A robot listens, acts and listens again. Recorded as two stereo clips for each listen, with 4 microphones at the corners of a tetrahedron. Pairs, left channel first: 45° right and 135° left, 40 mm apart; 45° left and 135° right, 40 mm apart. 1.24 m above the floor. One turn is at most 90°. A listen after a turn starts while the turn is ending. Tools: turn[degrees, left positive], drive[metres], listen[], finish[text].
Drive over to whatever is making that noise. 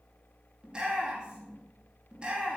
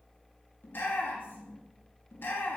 Thought: The shout: 70° left.
Action: turn[70]
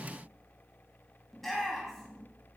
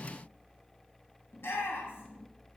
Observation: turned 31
Thought: The shout is now 40° left.
Action: turn[40]
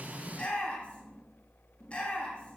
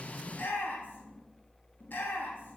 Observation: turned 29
Thought: The shout is now 15° left.
Action: turn[15]
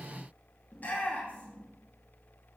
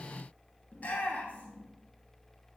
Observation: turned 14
Action: drive[1.0]
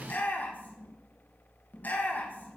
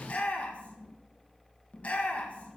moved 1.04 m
Action: drive[1.0]
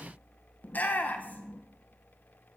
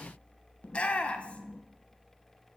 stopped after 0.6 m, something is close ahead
Thought: The shout is now 10° right.
Action: turn[-10]
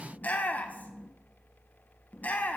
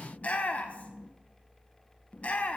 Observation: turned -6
Action: finish[Arrived at the shout, straight ahead.]